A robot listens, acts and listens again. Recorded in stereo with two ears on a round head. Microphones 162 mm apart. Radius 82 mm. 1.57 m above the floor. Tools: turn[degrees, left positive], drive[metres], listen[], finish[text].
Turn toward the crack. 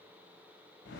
Action: listen[]
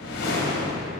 Action: listen[]
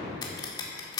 Thought: The crack: about 25° left or 155° left.
Action: turn[25]
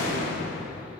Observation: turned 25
Action: listen[]
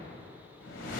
Action: finish[I heard a crack, but can't make it out now. It was about straight ahead or 130° left.]